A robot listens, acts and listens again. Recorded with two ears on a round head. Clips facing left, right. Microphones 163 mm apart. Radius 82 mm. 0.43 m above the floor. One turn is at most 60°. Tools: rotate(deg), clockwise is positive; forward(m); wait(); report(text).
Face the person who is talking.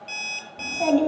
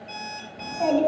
rotate(-30)
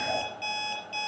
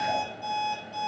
wait()
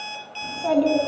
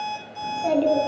rotate(25)
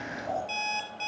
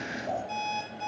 rotate(20)
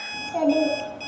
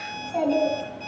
report("Found it: a child speaking, straight ahead.")